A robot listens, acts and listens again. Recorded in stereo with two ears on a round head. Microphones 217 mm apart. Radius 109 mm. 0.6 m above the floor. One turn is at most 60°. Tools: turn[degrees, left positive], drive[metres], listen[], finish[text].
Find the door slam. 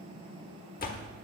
Thought: The door slam: about 40° left or 140° left.
Action: turn[40]
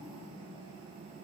Action: listen[]
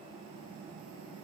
Action: finish[I heard a door slam, but can't make it out now. It was about straight ahead or 100° left.]